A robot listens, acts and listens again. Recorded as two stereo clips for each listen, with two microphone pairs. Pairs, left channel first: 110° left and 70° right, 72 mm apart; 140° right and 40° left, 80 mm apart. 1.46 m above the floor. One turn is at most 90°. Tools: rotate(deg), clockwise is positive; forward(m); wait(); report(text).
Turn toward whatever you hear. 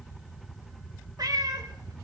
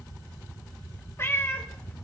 rotate(85)
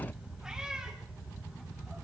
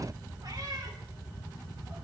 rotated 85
wait()
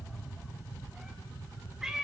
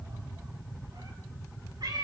rotate(-10)
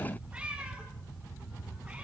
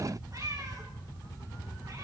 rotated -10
report("Facing the cat meowing, over 4 m away.")